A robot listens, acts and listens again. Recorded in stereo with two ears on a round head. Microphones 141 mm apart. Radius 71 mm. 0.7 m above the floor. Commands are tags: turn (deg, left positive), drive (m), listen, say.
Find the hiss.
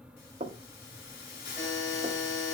<turn deg="65"/>
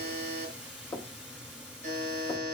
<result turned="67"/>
<say>Found it: a hiss, straight ahead, over 4 m away.</say>